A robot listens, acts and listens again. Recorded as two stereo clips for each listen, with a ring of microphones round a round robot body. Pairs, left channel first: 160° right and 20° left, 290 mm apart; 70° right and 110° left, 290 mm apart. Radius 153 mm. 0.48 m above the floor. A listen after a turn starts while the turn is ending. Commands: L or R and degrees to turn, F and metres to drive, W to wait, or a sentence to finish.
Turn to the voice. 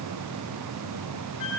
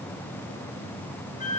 W
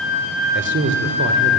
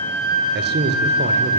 L65
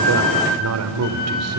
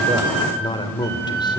Facing the man speaking.